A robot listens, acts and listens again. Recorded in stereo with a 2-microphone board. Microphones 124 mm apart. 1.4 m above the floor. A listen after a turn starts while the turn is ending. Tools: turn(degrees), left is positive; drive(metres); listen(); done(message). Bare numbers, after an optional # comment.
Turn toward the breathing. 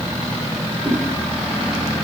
listen()
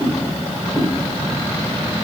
listen()
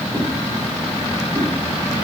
done("I can't make out breathing, only a whoosh.")